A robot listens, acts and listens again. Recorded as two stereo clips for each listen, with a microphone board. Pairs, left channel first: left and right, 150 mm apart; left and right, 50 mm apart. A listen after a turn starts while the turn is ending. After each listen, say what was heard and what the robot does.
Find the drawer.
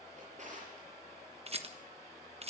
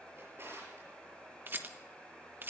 The drawer: about 55° right or 125° right. Turn 55° right.
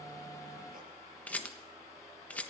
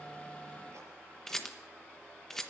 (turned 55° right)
Keep listening.
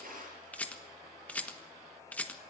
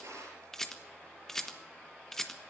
So it is at 75° right. Turn 75° right.
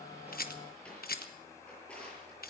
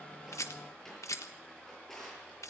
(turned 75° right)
The drawer is now 10° left. Turn 10° left.
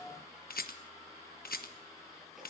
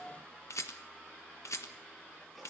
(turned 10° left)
Keep listening.
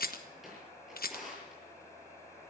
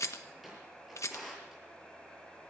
Facing the drawer, over 4 m away.